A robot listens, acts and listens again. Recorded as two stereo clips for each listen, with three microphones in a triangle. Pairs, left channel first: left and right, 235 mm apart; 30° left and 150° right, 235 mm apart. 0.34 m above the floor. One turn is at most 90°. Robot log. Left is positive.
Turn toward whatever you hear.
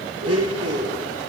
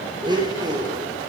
note: The blender: 75° right.
cmd yaw -75
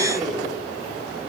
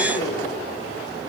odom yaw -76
cmd idle
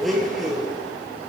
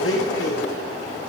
end: Facing the blender.